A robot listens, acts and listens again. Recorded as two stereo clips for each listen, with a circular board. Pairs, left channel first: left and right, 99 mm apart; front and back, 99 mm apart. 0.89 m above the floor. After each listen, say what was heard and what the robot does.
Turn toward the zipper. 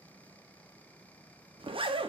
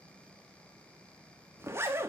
The zipper: 115° right. Turn 115° right.
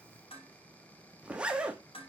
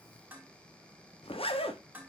The zipper is now 10° right. Turn 10° right.
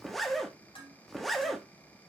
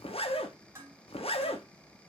Found it: a zipper, straight ahead.